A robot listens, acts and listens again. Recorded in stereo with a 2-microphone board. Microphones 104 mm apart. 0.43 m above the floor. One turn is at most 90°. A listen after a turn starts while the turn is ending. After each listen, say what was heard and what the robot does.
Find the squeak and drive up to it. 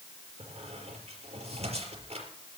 Turn 90° right.
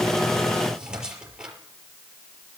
So it is at 10° right. Turn 10° right.
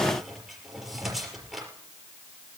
Drive 1.0 m forward.
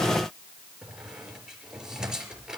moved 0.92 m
Drive 1.0 m forward.
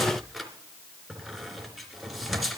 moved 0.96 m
Drive 1.0 m forward.
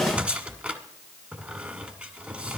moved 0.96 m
The squeak is now 15° right. Turn 15° right.
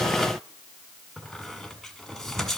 Drive 1.0 m forward.
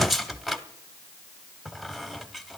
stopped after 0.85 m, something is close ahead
Arrived at the squeak, straight ahead.